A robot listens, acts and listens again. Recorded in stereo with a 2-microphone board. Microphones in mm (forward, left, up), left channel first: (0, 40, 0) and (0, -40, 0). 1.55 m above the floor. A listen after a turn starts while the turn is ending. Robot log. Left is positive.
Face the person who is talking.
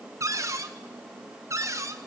cmd idle
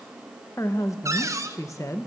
note: The woman speaking: about 40° left or 140° left.
cmd yaw +40
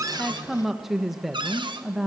end: Facing the woman speaking, 1 to 2 m away.